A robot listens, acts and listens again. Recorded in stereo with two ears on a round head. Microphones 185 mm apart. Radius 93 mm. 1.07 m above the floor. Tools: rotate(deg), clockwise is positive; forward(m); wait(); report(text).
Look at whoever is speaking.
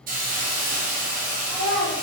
rotate(-30)
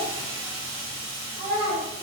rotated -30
rotate(25)
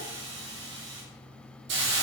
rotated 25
wait()
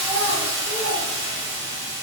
wait()
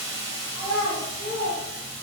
rotate(10)
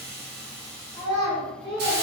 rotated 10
report("Facing the child speaking.")